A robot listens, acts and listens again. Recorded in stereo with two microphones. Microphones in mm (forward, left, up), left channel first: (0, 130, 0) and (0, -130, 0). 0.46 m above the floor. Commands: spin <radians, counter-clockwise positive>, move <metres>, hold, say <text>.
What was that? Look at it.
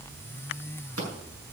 spin -1.13
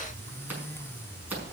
say Facing the scissors.